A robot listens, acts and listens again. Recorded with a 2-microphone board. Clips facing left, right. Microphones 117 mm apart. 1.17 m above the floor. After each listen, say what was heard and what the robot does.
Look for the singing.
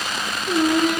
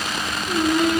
Turn 90° left.
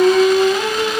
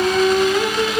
So it is at 20° left. Turn 20° left.
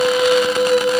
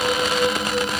The singing is now 10° left. Turn 10° left.
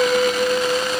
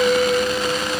Found it: singing, straight ahead.